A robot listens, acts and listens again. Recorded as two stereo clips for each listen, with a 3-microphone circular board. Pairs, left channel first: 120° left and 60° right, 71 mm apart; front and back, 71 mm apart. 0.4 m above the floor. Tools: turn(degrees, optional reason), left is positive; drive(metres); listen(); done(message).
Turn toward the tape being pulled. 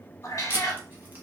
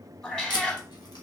done("Found it: tape being pulled, straight ahead, under 1 m away.")